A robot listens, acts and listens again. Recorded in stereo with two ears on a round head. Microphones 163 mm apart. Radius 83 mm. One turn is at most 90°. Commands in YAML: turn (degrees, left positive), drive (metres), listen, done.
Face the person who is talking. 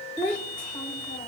turn: 30
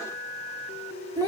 turn: -25
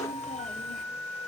listen: true
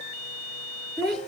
done: "Found it: a child speaking, straight ahead, under 1 m away."